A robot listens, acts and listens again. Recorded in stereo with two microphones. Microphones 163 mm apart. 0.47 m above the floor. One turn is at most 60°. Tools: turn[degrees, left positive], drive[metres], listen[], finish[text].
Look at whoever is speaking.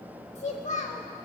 Thought: The child speaking: about 45° left or 135° left.
Action: turn[45]
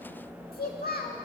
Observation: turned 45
Thought: So it is at 85° left.
Action: turn[60]
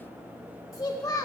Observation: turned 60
Thought: The child speaking is now 25° left.
Action: turn[25]
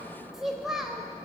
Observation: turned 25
Action: finish[Facing the child speaking, 1 to 2 m away.]